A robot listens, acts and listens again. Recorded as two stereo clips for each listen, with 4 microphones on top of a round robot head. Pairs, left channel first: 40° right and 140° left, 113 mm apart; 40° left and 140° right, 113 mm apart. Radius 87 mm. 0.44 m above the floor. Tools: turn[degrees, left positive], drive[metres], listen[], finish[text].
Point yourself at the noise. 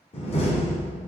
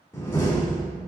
Thought: The door slam: 25° right.
Action: turn[-25]
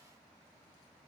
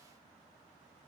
Action: finish[I heard a door slam from this way, but can't make it out now.]